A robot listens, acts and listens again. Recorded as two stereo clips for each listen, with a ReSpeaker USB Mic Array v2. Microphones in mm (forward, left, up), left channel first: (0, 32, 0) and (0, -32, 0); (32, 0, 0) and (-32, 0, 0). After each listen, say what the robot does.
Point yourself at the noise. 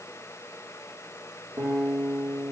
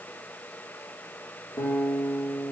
Turn 45° right.
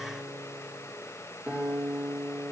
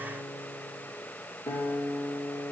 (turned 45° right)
Turn 15° right.
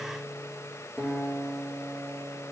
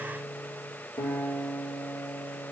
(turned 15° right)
Found it: a guitar, straight ahead.